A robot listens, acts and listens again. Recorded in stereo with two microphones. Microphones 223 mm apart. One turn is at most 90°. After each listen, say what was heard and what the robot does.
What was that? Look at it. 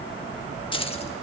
The keys jangling: about 25° left or 155° left. Turn 25° left.
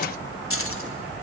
So it is at 105° left. Turn 90° left.
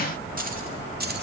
The keys jangling is now 45° right. Turn 45° right.
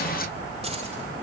Keep listening.
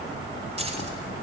The keys jangling is now 30° right. Turn 30° right.
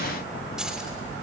Found it: keys jangling, straight ahead.